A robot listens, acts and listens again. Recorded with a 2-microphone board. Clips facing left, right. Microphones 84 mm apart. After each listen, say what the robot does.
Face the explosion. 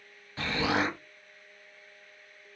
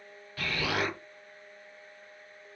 Turn 25° left.
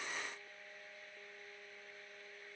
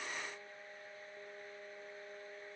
Keep listening.
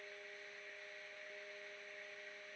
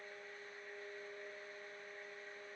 I heard an explosion, but can't make it out now. It was about straight ahead or 130° left.